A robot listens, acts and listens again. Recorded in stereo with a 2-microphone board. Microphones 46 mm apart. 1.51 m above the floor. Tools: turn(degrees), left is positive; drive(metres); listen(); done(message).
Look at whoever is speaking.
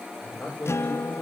turn(degrees=20)
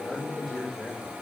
done("Facing the man speaking.")